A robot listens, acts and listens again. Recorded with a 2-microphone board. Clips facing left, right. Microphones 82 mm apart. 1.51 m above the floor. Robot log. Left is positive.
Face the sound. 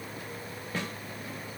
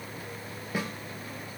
cmd yaw -30
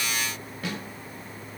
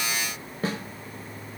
note: So it is at 140° right.
cmd yaw -140
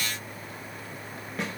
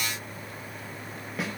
end: Facing the snare drum.